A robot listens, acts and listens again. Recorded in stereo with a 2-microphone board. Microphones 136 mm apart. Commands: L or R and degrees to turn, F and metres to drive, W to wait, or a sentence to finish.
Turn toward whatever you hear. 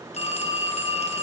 L50
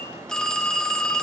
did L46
Found it: a phone ringing, straight ahead, under 1 m away.